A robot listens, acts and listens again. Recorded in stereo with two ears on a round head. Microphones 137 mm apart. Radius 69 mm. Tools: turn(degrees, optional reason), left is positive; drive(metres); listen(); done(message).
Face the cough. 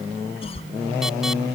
turn(degrees=40, reason="The cough: about 40° left or 140° left.")
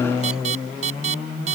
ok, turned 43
listen()
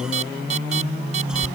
listen()
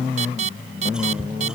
done("I heard a cough, but can't make it out now. It was about 5° right or 100° left.")